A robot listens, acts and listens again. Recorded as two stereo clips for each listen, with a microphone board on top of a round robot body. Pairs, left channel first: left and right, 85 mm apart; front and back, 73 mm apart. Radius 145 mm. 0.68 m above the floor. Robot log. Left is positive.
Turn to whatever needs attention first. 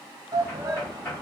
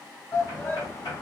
note: The shout: 50° right.
cmd yaw -50
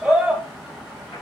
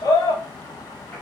end: Facing the shout, 1 to 2 m away.